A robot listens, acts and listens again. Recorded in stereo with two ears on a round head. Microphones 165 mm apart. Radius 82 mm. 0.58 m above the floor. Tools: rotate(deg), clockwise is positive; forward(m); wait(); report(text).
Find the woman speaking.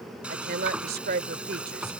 rotate(55)
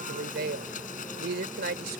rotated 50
rotate(65)
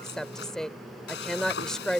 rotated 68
report("Found it: a woman speaking, straight ahead.")